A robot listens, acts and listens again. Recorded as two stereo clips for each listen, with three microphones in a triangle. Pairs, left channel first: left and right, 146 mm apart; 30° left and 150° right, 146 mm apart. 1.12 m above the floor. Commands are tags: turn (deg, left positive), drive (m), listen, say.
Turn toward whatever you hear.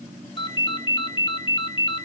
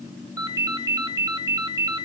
<turn deg="145"/>
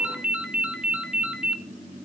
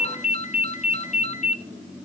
<say>Facing the ringtone.</say>